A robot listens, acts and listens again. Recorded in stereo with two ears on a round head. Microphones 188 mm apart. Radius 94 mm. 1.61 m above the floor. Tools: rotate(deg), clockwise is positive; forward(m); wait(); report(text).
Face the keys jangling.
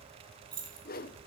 rotate(25)
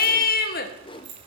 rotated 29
rotate(120)
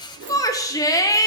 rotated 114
wait()
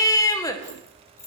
rotate(-15)
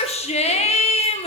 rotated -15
wait()
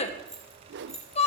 report("Found it: keys jangling, straight ahead, 2 to 4 m away.")